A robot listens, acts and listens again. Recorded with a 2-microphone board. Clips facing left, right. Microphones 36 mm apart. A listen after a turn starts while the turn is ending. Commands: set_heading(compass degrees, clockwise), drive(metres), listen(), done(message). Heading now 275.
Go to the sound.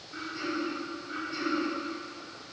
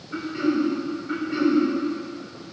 set_heading(330)
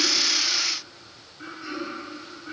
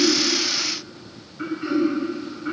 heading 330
set_heading(25)
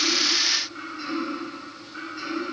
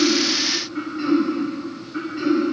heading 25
set_heading(45)
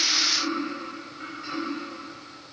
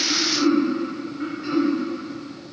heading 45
drive(1.0)
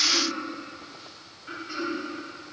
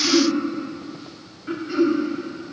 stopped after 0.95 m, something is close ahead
set_heading(60)
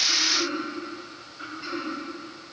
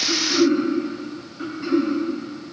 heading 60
done("I am next to the throat clearing.")